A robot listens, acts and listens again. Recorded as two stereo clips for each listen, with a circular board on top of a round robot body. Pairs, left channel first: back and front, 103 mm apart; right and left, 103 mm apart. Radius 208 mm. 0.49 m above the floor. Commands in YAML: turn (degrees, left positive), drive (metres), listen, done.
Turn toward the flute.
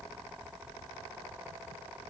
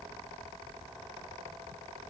listen: true
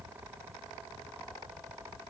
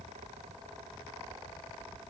listen: true
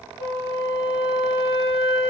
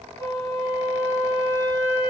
turn: -30
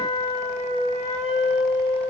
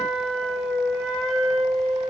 done: "Facing the flute."